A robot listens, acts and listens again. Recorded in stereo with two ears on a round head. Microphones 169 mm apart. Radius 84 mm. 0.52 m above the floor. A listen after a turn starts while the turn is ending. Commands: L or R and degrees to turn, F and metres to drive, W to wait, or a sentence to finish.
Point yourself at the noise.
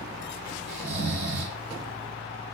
R60
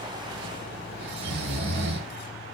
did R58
R55
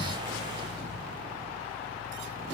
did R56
W
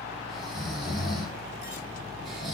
Facing the snoring, under 1 m away.